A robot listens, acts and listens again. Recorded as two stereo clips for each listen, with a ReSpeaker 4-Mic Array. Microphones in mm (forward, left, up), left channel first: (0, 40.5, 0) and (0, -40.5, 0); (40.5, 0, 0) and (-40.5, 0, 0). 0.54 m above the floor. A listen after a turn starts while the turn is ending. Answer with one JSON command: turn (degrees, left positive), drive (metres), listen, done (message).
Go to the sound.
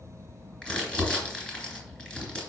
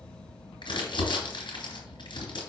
{"turn": 15}
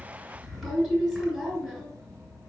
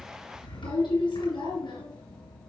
{"drive": 1.0}
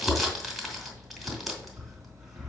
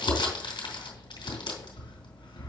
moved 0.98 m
{"drive": 1.0}
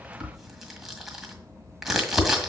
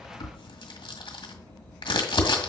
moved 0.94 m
{"drive": 1.0}
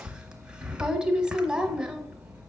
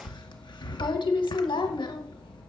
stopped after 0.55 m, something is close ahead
{"turn": -10}
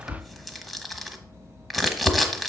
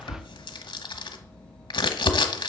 {"done": "Arrived at the crumpling, straight ahead."}